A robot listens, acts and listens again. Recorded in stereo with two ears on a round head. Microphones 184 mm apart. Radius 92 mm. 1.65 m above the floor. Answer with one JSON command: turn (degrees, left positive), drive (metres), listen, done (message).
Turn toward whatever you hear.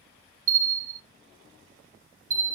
{"turn": -40}
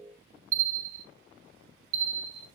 {"turn": -100}
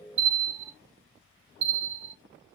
{"turn": -35}
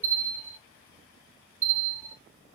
{"turn": -10}
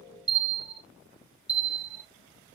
{"done": "Facing the bell."}